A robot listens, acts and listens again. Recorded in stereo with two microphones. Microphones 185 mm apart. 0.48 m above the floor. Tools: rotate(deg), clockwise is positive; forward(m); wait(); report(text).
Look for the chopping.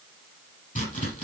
rotate(-45)
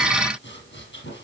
wait()
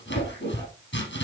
rotate(-90)
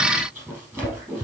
rotate(10)
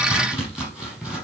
report("Facing the chopping.")